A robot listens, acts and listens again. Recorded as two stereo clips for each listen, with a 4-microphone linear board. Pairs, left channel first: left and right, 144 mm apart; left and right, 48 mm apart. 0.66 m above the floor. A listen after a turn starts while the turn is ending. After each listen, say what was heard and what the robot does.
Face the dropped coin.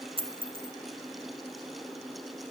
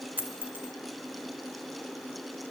The dropped coin: about 40° right or 140° right. Turn 40° right.
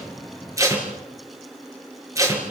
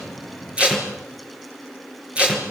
Keep listening.
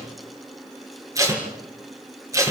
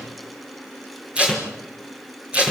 I heard a dropped coin, but can't make it out now. It was about straight ahead or 100° right.